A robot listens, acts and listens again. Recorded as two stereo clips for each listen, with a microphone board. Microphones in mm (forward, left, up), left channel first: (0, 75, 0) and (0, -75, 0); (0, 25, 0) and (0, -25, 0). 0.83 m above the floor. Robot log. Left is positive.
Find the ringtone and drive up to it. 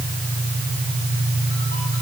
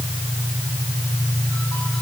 cmd idle
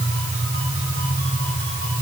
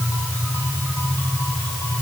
cmd idle
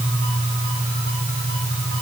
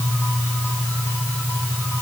end: I can't make out a ringtone to turn to.